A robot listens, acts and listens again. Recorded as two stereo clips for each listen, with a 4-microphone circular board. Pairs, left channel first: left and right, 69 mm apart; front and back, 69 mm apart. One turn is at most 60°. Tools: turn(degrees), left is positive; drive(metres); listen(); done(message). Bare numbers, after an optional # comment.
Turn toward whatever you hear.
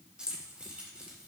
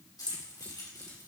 # The keys jangling: 15° right.
turn(-15)
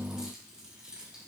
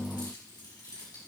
# The keys jangling is now 10° right.
turn(-10)
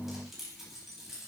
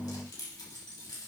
done("Facing the keys jangling.")